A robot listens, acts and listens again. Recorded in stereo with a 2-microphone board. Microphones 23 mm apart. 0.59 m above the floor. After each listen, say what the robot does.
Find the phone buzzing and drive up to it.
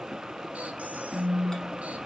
Turn 25° right.
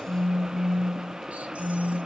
Drive 1.0 m forward.
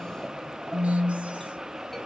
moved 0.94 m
Drive 1.0 m forward.
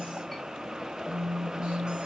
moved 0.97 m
Drive 1.0 m forward.
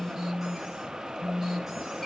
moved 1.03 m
Turn 15° right.
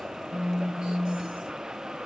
Drive 1.0 m forward.
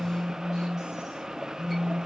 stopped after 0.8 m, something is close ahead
Arrived at the phone buzzing, straight ahead.